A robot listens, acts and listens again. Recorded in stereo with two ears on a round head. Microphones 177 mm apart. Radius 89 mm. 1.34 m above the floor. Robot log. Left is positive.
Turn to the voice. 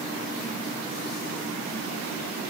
cmd idle
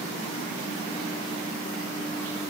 cmd idle
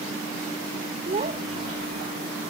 note: The child speaking: about 30° right or 150° right.
cmd yaw -30
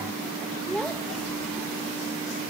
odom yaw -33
end: Found it: a child speaking, straight ahead.